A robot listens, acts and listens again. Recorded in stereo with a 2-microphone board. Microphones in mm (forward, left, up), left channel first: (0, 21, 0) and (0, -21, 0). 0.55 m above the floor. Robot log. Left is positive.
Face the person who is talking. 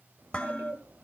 note: The child speaking: about 70° right or 110° right.
cmd yaw -70
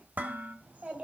note: So it is at 30° right.
cmd yaw -30
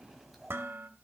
end: Facing the child speaking, 2 to 4 m away.